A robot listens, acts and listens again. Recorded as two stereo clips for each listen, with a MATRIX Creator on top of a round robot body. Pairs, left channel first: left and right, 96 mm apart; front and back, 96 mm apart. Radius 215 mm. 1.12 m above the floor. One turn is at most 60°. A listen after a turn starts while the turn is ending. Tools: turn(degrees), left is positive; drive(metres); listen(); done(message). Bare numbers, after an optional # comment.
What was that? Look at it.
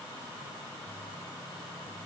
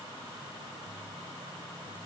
listen()
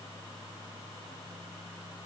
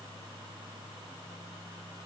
listen()
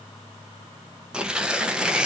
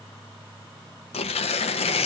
# The tearing paper: 10° right.
turn(-10)
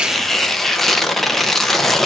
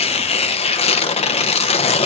done("Found it: tearing paper, straight ahead.")